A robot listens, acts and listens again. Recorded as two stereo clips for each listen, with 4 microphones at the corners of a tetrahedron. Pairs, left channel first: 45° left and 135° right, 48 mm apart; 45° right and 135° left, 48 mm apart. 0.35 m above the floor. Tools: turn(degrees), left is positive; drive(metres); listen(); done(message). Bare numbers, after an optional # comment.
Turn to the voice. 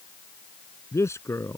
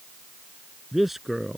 # The man speaking: 50° left.
turn(50)
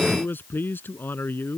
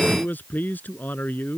done("Facing the man speaking.")